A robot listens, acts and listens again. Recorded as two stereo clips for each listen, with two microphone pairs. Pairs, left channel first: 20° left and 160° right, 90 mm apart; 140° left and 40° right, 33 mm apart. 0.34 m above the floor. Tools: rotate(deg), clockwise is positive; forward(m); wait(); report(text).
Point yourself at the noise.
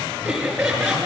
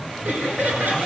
rotate(75)
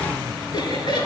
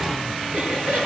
rotate(15)
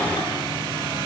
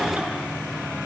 wait()
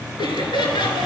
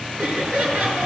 report("Facing the laughter, over 4 m away.")